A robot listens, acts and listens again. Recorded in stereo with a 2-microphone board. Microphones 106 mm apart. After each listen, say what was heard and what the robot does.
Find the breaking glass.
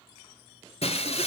Turn 90° left.
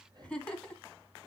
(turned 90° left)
I heard breaking glass from this way, but can't make it out now.